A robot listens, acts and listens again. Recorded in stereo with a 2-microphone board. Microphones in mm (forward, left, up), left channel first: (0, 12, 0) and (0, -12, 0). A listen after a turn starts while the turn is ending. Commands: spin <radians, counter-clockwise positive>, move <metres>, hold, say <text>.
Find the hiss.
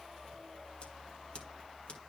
hold
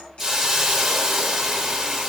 spin -0.52
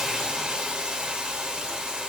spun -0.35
spin -2.62
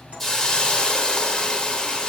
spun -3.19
spin 0.52
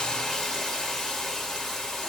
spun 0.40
say Facing the hiss.